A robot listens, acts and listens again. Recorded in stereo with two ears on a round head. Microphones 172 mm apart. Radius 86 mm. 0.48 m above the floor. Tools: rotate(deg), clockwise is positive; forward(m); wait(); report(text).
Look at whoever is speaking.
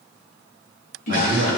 rotate(60)
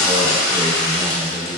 wait()
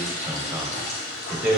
rotate(10)
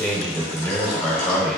report("Found it: a man speaking, straight ahead.")